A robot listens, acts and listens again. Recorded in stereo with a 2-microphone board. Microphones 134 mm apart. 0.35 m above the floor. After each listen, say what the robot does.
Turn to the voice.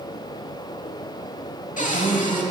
Turn 70° right.
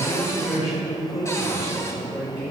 Turn 10° right.
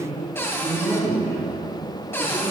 Found it: a man speaking, straight ahead, over 4 m away.